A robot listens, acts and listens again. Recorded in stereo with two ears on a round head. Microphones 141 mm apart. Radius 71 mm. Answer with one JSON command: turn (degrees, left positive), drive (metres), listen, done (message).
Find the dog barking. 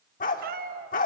{"turn": 55}
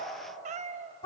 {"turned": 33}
{"turn": 40}
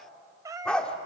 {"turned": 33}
{"turn": 10}
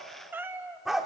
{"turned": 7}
{"done": "Found it: a dog barking, straight ahead."}